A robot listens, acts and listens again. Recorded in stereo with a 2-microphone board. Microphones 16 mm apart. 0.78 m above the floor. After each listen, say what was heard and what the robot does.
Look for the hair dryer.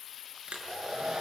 The hair dryer: about 75° right or 105° right. Turn 75° right.
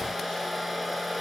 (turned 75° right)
Facing the hair dryer.